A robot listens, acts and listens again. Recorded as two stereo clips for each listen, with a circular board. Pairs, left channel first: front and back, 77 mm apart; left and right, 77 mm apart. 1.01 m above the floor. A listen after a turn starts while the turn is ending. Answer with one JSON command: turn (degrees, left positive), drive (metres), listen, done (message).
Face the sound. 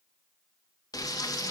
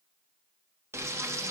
{"turn": -40}
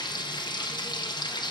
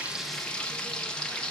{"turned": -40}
{"turn": 10}
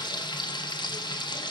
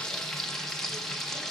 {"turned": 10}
{"done": "Facing the frying."}